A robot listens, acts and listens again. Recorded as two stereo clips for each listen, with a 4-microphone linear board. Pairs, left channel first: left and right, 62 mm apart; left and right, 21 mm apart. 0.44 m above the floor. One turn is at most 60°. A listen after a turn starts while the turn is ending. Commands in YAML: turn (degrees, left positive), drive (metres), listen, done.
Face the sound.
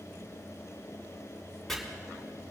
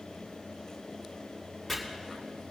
turn: 30
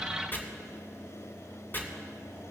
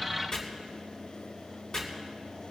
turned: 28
turn: 60
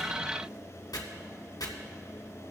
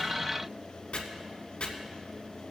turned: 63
turn: 60
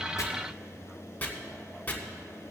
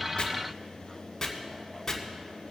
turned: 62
turn: 25
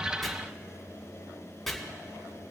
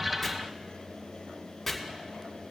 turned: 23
done: "Facing the chopping."